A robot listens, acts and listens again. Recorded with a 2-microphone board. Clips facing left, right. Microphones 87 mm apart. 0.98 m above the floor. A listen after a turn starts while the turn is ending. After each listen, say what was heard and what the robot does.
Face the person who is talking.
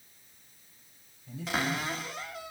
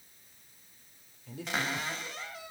Turn 90° right.
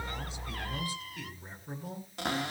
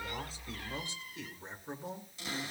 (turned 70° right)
So it is at 25° right. Turn 25° right.
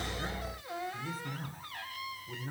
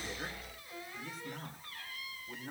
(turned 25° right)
Facing the man speaking, 2 to 4 m away.